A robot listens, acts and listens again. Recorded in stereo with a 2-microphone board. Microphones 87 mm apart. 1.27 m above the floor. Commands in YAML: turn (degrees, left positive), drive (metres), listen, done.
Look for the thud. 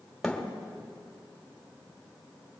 turn: 30
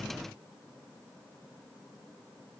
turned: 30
listen: true
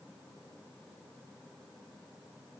done: "I heard a thud, but can't make it out now. It was about 25° right or 145° left."